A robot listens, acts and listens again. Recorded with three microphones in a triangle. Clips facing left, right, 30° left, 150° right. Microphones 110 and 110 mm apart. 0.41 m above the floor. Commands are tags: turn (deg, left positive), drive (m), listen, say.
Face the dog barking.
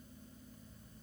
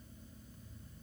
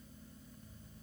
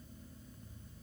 <listen/>
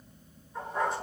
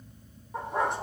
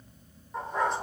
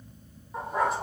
<turn deg="-65"/>
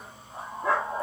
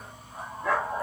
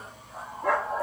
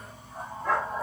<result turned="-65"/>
<turn deg="25"/>
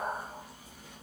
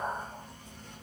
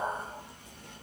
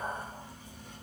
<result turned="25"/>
<turn deg="10"/>
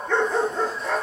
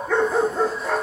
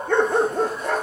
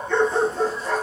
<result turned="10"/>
<say>Found it: a dog barking, straight ahead.</say>